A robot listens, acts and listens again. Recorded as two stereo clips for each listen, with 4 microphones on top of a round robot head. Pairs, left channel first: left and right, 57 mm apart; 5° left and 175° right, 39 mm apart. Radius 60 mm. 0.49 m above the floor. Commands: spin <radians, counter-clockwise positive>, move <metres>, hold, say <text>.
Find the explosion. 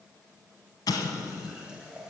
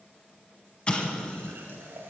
spin 1.22
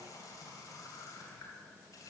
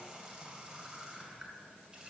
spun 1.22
say I heard an explosion from this way, but can't make it out now.